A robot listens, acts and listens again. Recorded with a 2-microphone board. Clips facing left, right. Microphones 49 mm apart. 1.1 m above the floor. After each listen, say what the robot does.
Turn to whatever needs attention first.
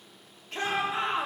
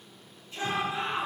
Turn 65° left.
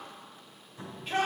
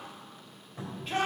Found it: a shout, straight ahead, 2 to 4 m away.